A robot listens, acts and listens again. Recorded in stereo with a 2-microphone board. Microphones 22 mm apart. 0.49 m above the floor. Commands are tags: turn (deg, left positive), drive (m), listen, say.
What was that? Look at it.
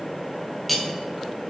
<turn deg="30"/>
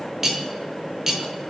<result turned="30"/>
<turn deg="-25"/>
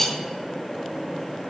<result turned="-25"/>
<turn deg="10"/>
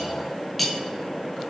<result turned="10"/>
<say>Facing the cutlery clinking.</say>